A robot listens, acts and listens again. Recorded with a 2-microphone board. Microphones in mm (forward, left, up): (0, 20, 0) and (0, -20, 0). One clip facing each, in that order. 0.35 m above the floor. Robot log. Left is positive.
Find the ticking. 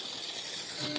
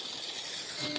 cmd yaw -30
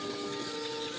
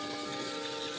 note: So it is at 140° right.
cmd yaw -140
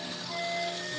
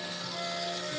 note: The ticking is now 60° right.
cmd yaw -60
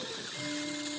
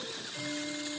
note: The ticking is now 10° right.
cmd yaw -10
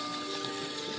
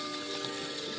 end: Found it: ticking, straight ahead.